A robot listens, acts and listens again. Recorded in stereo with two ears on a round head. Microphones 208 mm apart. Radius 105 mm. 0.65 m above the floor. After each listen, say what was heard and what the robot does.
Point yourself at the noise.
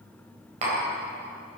The tapping: about 30° right or 150° right. Turn 30° right.
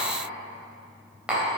Found it: tapping, straight ahead.